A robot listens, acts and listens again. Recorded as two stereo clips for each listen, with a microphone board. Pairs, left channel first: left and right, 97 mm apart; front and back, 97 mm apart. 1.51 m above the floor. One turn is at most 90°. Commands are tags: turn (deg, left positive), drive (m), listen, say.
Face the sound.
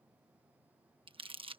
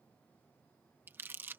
<turn deg="-90"/>
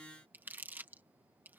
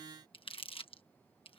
<turn deg="-20"/>
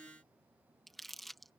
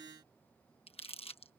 <say>Facing the crumpling.</say>